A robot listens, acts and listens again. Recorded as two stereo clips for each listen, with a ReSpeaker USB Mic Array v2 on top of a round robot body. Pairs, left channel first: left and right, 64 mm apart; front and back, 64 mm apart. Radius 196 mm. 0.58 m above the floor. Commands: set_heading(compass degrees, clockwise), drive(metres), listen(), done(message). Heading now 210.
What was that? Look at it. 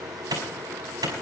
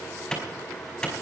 set_heading(290)
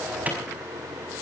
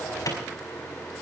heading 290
set_heading(315)
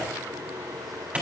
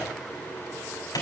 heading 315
set_heading(335)
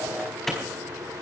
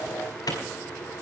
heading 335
done("Found it: a clap, straight ahead.")